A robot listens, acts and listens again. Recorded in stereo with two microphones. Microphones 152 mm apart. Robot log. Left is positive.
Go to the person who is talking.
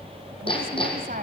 note: The woman speaking: about 65° right or 115° right.
cmd yaw -65
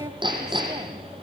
note: So it is at 30° right.
cmd yaw -30
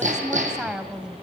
cmd fwd 1.0
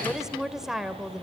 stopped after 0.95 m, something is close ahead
end: Arrived at the woman speaking, straight ahead.